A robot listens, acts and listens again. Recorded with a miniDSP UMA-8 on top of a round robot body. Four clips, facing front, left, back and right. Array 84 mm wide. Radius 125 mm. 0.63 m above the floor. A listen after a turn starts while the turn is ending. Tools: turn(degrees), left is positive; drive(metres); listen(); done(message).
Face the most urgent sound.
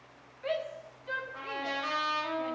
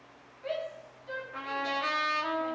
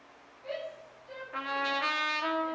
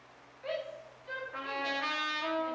turn(degrees=-10)
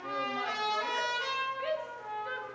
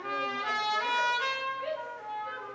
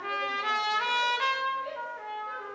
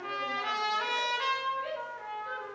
done("Found it: a shout, straight ahead, 2 to 4 m away.")